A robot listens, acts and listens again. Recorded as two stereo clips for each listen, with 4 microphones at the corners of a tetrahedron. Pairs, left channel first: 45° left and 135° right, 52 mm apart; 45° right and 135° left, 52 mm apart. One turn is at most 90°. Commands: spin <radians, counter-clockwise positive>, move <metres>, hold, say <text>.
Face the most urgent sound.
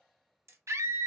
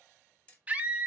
spin -1.57
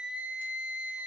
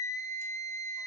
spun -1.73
spin -1.13
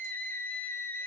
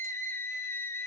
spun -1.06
say Found it: a scream, straight ahead, under 1 m away.